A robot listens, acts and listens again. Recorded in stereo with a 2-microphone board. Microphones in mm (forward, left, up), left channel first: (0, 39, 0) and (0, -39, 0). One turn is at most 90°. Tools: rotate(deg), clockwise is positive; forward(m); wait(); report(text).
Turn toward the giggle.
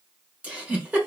rotate(20)
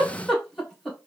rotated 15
report("Found it: a giggle, straight ahead, 1 to 2 m away.")